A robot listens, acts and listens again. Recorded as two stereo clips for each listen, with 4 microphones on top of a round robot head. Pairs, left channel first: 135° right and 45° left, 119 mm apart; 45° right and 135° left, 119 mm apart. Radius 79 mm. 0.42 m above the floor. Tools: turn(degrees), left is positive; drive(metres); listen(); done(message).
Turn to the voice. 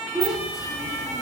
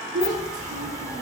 turn(degrees=130)
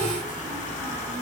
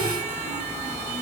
listen()
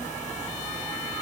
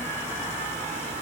listen()
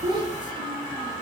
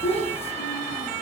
done("Facing the child speaking.")